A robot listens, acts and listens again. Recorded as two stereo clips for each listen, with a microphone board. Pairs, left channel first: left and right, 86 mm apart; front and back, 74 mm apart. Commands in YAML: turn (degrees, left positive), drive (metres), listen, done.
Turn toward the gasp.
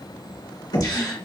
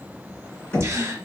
turn: 130
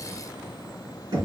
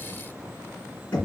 done: "I heard a gasp from this way, but can't make it out now."